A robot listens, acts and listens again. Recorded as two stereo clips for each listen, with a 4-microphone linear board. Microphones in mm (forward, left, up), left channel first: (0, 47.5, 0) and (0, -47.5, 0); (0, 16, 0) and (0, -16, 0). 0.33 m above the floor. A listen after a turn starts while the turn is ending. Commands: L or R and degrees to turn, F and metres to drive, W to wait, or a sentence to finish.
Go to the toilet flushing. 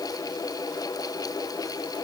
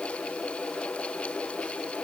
W
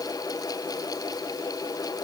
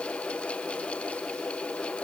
W
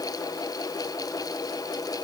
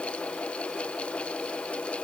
I can't make out a toilet flushing to turn to.